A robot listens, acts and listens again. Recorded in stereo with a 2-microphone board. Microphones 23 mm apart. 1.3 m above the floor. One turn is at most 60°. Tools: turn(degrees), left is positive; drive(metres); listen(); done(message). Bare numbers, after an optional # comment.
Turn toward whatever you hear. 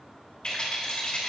# The rattle: about 45° left or 135° left.
turn(45)
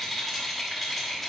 # So it is at 10° left.
turn(10)
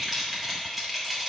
done("Found it: a rattle, straight ahead.")